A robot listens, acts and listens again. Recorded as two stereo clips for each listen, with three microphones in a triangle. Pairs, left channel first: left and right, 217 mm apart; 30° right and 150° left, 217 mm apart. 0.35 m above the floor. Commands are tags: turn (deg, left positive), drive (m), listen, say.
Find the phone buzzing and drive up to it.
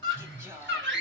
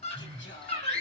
<turn deg="-120"/>
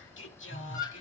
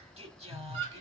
<turn deg="-15"/>
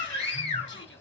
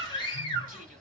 <listen/>
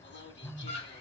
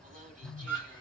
<drive m="1.0"/>
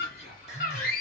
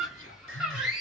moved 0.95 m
<listen/>
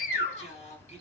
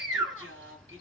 <listen/>
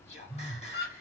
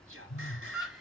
<drive m="1.0"/>
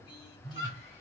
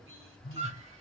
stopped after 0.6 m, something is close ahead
<say>I am next to the phone buzzing.</say>